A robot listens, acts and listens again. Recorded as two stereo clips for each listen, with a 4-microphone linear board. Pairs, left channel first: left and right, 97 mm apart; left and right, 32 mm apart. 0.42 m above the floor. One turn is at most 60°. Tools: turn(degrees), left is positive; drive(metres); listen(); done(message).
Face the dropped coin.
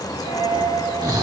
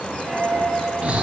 turn(degrees=-55)
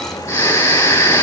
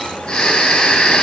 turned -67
listen()
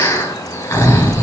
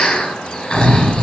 done("I heard a dropped coin, but can't make it out now. It was about 15° left or 60° right.")